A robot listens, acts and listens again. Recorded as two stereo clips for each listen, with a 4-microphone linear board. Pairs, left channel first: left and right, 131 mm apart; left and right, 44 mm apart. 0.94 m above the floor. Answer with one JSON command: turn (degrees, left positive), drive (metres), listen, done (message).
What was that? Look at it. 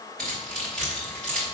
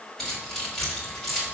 {"turn": 30}
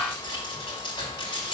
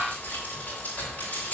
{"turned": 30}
{"turn": 145}
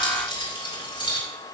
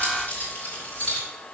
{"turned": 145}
{"turn": 40}
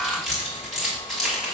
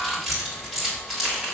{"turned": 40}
{"done": "Facing the keys jangling, 2 to 4 m away."}